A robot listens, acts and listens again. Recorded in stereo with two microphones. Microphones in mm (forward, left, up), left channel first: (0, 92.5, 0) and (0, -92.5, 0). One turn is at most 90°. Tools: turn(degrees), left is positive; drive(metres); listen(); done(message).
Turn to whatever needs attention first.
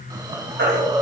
turn(degrees=-75)
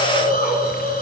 listen()
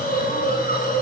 listen()
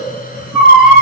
done("Found it: a baby crying, straight ahead, 2 to 4 m away.")